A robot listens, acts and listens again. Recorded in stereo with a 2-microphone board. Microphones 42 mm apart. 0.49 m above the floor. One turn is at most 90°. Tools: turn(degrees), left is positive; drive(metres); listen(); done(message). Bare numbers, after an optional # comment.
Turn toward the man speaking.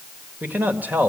# The man speaking: about 40° right or 140° right.
turn(-40)
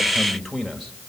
done("Facing the man speaking.")